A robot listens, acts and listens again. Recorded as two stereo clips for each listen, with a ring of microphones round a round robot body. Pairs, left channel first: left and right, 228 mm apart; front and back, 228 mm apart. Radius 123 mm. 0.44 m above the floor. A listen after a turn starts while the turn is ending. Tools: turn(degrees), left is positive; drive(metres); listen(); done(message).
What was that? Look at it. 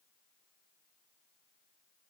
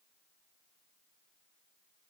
listen()
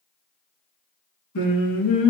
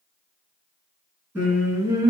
turn(degrees=105)
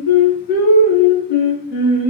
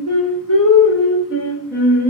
turn(degrees=50)
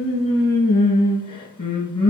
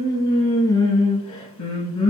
turn(degrees=20)
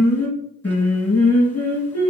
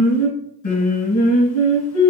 done("Facing the singing, 1 to 2 m away.")